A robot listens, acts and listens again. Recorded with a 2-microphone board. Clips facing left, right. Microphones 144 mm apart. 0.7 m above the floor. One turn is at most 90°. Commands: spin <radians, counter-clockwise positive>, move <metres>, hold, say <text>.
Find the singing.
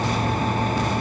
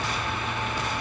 hold
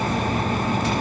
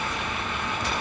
hold
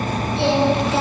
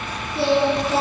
spin -0.70
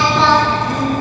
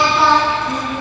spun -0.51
spin -0.17
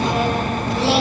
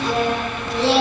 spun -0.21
say Found it: singing, straight ahead, over 4 m away.